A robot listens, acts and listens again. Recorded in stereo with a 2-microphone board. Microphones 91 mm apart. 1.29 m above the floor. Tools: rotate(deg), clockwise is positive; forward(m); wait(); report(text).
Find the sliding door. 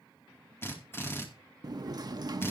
rotate(45)
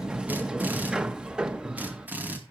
rotate(10)
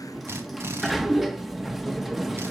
report("Facing the sliding door.")